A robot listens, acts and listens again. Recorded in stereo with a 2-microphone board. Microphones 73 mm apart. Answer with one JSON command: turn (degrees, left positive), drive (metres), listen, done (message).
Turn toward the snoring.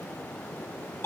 {"listen": true}
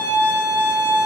{"listen": true}
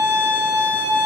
{"done": "I can't make out snoring, only a violin."}